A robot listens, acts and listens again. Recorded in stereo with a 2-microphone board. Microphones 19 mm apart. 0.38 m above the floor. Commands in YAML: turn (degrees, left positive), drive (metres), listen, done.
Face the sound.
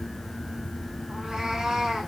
turn: -40
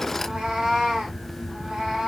turn: -115
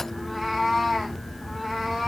turn: -15
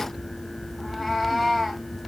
done: "Found it: a cat meowing, straight ahead."